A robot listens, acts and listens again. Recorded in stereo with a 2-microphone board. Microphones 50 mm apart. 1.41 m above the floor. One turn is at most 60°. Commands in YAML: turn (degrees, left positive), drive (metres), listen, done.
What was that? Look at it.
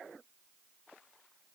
listen: true
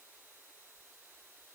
listen: true
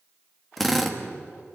turn: 30
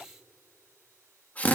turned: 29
turn: 60
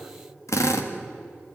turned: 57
turn: 60
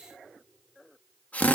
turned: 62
turn: 30
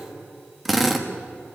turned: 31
done: "Found it: a drill, straight ahead."